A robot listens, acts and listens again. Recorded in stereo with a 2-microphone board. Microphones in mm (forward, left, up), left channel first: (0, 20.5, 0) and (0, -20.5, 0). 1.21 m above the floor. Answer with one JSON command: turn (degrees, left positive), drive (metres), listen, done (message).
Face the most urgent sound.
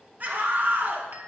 {"turn": -45}
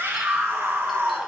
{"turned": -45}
{"turn": -90}
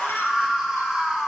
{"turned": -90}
{"turn": -15}
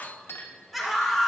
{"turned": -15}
{"done": "Found it: a scream, straight ahead."}